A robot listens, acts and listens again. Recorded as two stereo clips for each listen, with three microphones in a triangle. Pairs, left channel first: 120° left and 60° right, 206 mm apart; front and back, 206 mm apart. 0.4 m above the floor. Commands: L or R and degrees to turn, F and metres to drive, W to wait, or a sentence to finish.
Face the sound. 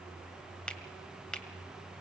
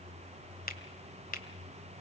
L35
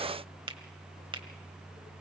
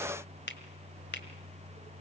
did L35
Found it: a finger snap, straight ahead.